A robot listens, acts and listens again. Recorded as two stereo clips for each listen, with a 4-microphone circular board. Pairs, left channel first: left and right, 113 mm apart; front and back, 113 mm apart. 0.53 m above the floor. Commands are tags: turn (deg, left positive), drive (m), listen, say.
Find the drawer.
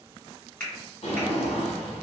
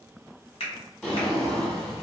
<turn deg="85"/>
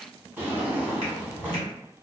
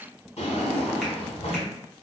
<turn deg="-15"/>
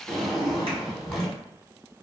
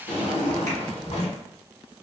<say>Facing the drawer.</say>